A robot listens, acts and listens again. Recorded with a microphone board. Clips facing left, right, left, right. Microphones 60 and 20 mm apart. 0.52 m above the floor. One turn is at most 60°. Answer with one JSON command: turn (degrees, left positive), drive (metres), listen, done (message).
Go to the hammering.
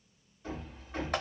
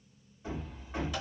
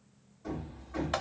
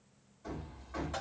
{"turn": -30}
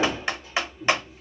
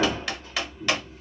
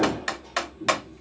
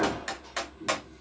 {"turn": -60}
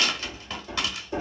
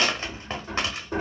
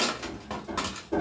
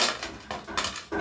{"turn": -60}
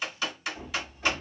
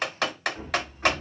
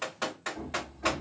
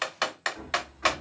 {"turn": -45}
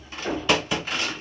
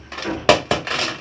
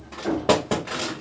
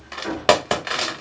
{"turn": -35}
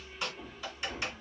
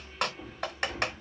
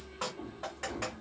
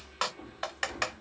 {"drive": 1.0}
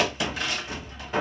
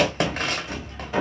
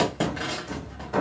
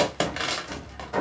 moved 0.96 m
{"drive": 1.0}
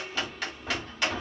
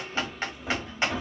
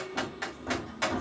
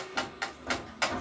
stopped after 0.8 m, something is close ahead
{"done": "I am next to the hammering."}